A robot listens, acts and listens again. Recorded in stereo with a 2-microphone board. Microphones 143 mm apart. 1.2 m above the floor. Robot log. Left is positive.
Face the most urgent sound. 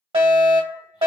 note: The fire alarm: about 40° right or 140° right.
cmd yaw -40
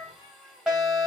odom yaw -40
note: So it is at 10° right.
cmd yaw -10
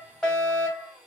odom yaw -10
end: Found it: a fire alarm, straight ahead, 1 to 2 m away.